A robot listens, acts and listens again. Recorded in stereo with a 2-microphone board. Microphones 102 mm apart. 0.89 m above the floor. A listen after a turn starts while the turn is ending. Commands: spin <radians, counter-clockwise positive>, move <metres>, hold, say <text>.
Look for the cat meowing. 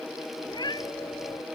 spin 0.79
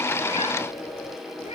spin 1.66
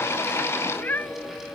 spin 0.35
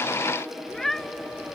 say Found it: a cat meowing, straight ahead.